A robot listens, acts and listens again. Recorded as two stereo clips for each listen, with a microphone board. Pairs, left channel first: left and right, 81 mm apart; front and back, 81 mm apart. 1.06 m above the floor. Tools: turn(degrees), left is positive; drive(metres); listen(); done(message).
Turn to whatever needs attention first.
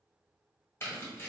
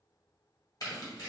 listen()
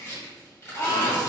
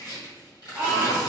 turn(degrees=100)
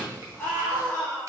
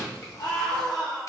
turn(degrees=20)
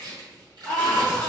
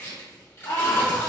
done("Found it: a scream, straight ahead, 1 to 2 m away.")